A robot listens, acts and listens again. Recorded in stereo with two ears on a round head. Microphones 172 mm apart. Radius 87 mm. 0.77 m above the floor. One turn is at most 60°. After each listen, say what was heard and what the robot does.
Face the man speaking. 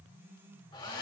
Keep listening.
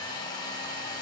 Keep listening.
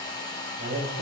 The man speaking: about 55° right or 125° right. Turn 55° right.
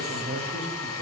So it is at 65° right. Turn 60° right.
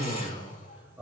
The man speaking is now 10° right. Turn 10° right.
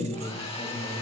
Found it: a man speaking, straight ahead.